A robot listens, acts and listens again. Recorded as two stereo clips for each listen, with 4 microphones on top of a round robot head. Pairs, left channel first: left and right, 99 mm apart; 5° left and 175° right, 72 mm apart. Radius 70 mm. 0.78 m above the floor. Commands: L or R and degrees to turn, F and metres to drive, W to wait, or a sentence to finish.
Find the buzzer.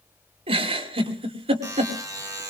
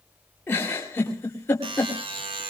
R160
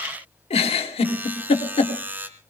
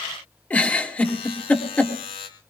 R20
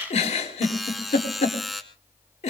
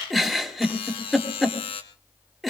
Found it: a buzzer, straight ahead, 2 to 4 m away.